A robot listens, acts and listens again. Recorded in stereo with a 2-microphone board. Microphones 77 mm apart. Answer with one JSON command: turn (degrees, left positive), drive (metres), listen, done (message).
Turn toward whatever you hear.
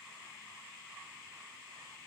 {"listen": true}
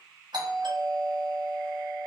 {"turn": -65}
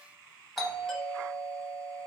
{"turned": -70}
{"done": "Found it: a doorbell, straight ahead, 1 to 2 m away."}